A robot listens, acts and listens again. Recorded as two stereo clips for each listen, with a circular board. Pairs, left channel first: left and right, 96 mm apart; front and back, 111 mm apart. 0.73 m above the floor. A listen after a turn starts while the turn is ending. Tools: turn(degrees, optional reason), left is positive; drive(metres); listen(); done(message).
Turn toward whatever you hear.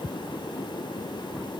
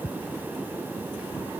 listen()
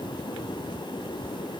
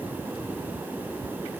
listen()
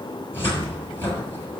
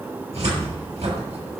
turn(degrees=160, reason="The cupboard door: 160° left.")
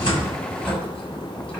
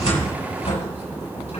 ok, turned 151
turn(degrees=10, reason="The cupboard door is now 10° left.")
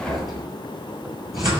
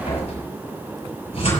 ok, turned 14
done("Found it: a cupboard door, straight ahead.")